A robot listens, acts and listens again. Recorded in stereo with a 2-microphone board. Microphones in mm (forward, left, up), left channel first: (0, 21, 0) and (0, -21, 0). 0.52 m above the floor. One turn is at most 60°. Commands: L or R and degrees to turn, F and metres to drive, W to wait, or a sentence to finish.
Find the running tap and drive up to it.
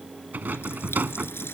L60
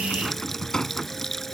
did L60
F1.0
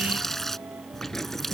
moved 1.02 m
F1.0
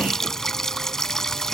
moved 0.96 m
L10
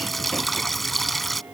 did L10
F1.0
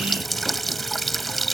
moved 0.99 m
F1.0
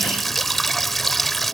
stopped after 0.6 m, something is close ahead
I am next to the running tap.